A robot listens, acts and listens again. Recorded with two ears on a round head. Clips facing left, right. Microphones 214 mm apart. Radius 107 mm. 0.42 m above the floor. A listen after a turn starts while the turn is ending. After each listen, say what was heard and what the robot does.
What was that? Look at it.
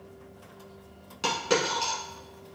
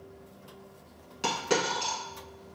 Turn 30° left.
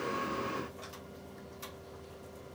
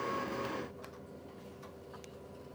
Keep listening.
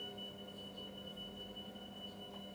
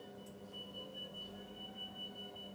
I heard a dropped coin, but can't make it out now. It was about 30° right or 150° left.